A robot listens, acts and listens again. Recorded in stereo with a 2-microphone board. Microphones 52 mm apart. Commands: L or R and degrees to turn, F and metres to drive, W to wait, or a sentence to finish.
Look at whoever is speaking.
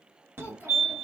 L45
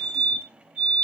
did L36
W
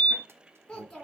L10
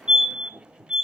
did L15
W
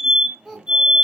Found it: a child speaking, straight ahead.